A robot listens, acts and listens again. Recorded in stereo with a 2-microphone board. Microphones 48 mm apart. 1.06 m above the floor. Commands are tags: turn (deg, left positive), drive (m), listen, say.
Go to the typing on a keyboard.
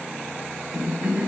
<listen/>
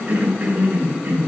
<listen/>
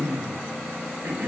<say>I can't make out typing on a keyboard, only a cough.</say>